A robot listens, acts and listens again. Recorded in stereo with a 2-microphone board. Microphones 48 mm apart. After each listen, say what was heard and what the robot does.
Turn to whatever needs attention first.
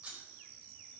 Keep listening.
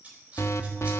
The alarm: about 70° left or 110° left. Turn 70° left.
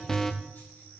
So it is at 10° left. Turn 10° left.
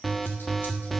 Facing the alarm.